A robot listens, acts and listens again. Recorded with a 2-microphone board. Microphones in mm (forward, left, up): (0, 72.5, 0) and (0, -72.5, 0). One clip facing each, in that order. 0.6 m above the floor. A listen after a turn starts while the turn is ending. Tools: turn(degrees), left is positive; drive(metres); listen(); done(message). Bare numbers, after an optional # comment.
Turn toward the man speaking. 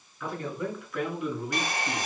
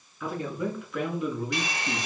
turn(30)
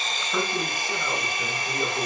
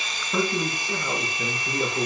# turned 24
turn(-30)
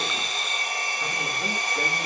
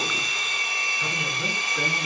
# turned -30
# So it is at 20° left.
turn(20)
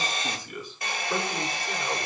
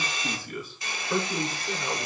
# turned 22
done("Found it: a man speaking, straight ahead, over 4 m away.")